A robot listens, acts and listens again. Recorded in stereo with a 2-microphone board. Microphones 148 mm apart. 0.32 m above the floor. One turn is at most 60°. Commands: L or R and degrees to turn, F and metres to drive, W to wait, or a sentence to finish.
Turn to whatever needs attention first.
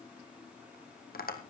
W
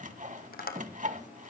W
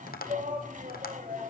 R60
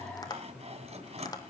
R10
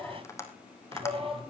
Facing the shout.